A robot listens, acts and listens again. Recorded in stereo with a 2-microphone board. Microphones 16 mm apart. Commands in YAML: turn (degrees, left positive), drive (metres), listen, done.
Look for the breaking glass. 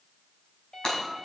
turn: 50
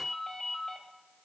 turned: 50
listen: true
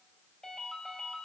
done: "I heard breaking glass, but can't make it out now. It was about straight ahead or 80° left."